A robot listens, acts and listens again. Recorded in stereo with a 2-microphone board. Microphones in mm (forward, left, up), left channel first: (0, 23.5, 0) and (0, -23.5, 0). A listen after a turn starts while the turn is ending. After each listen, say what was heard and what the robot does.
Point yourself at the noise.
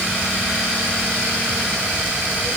Keep listening.
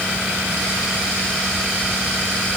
Keep listening.
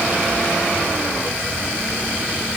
I can't make out anything.